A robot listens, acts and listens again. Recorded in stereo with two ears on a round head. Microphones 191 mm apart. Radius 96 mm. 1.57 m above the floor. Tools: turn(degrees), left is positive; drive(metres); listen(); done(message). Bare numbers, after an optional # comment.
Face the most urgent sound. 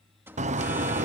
turn(-30)
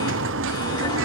listen()
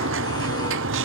listen()
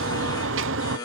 # So it is at 20° left.
turn(20)
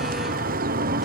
listen()
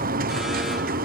listen()
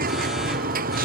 done("Facing where the alarm came from. I can't hear it now.")